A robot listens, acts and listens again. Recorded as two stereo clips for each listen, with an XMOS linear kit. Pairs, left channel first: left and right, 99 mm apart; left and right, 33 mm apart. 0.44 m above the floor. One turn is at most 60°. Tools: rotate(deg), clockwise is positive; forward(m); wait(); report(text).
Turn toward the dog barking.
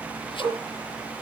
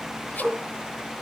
rotate(40)
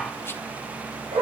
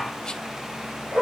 rotate(60)
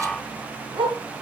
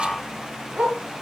rotate(45)
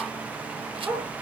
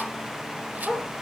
rotate(15)
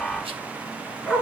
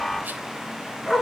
report("Found it: a dog barking, straight ahead, 2 to 4 m away.")